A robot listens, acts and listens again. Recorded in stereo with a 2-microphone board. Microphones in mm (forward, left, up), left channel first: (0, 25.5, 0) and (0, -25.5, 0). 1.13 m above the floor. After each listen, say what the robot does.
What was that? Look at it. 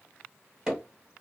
Turn 15° right.
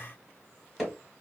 Facing the hammering.